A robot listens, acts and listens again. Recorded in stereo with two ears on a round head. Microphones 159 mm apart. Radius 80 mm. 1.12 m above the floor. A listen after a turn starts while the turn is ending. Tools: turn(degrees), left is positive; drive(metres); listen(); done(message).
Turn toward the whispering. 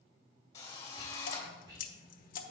turn(degrees=-20)
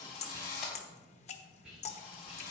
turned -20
done("Found it: whispering, straight ahead, 2 to 4 m away.")